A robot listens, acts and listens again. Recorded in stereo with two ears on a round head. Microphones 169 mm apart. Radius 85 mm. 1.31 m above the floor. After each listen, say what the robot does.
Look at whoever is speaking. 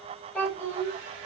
Turn 30° left.
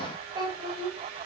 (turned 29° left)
Turn 25° right.
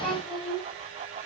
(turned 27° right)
Found it: a child speaking, straight ahead, over 4 m away.